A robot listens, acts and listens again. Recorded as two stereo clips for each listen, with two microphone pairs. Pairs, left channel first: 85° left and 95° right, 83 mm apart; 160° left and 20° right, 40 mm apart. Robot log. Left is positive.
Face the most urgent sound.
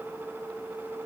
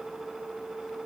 cmd idle
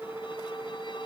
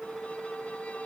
cmd idle
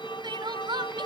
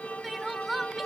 note: The crying: 105° right.
cmd yaw -105
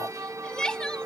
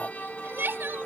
end: Found it: crying, straight ahead.